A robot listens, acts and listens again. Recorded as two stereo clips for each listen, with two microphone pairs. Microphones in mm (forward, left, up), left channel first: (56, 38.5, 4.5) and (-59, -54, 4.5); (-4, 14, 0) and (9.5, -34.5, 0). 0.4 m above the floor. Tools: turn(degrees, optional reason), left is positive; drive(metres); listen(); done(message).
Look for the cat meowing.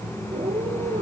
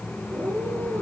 turn(degrees=-85, reason="The cat meowing: 85° right.")
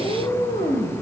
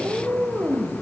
done("Facing the cat meowing.")